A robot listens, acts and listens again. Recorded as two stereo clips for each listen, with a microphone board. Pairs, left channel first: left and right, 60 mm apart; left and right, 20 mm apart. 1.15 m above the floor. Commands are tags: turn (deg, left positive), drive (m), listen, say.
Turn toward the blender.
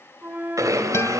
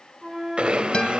<turn deg="-90"/>
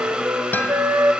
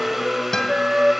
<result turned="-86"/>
<turn deg="-15"/>
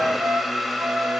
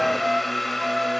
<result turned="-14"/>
<say>Facing the blender, 2 to 4 m away.</say>